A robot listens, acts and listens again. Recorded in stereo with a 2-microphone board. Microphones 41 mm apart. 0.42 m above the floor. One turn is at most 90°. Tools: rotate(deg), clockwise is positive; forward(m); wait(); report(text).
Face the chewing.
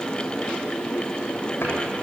wait()
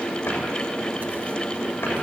wait()
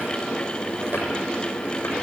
report("I can't make out chewing.")